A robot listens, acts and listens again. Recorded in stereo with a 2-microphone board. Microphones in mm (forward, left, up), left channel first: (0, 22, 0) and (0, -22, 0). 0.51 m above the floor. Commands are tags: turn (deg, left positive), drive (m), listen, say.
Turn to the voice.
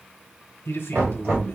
<turn deg="60"/>
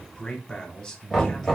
<turn deg="15"/>
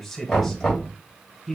<say>Facing the man speaking, 1 to 2 m away.</say>